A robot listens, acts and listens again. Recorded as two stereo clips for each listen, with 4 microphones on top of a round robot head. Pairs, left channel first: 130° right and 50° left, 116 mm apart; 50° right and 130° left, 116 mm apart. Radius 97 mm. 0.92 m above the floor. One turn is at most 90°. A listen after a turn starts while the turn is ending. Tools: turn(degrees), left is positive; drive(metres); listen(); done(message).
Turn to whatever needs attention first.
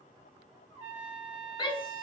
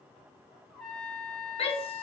turn(degrees=-85)
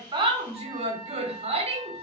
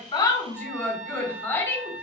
turn(degrees=25)
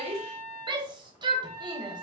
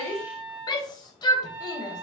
done("Facing the shout.")